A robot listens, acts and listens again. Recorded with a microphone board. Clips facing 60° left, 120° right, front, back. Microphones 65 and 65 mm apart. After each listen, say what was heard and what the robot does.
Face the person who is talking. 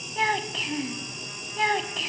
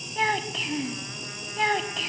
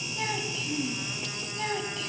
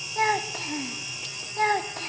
The child speaking: 150° left. Turn 150° left.
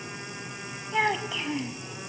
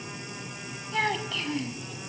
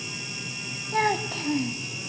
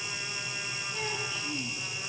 The child speaking is now 15° right. Turn 15° right.
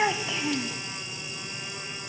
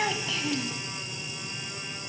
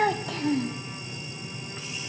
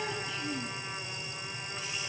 Facing the child speaking, 1 to 2 m away.